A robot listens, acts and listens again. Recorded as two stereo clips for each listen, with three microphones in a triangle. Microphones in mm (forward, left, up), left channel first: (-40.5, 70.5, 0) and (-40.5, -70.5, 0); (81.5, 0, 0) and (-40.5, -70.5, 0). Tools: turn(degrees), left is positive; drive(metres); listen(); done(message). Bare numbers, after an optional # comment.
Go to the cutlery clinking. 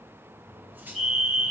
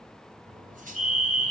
# The cutlery clinking: 165° right.
turn(-165)
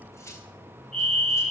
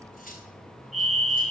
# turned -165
# The cutlery clinking is now 20° left.
turn(20)
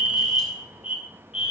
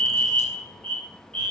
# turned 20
listen()
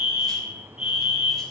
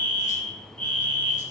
listen()
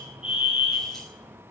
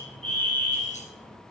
done("I heard cutlery clinking from this way, but can't make it out now. I did not reach it.")